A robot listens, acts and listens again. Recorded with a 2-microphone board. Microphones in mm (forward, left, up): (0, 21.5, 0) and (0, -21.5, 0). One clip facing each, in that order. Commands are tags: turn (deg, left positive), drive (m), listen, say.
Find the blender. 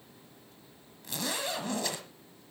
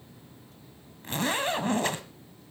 <listen/>
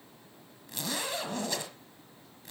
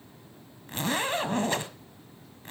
<listen/>
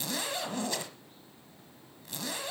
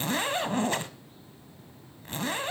<say>I can't make out a blender, only a zipper.</say>